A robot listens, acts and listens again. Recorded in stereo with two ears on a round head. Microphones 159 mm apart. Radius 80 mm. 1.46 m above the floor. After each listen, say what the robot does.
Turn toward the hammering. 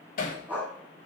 Turn 45° left.
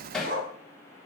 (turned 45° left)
Facing the hammering, 2 to 4 m away.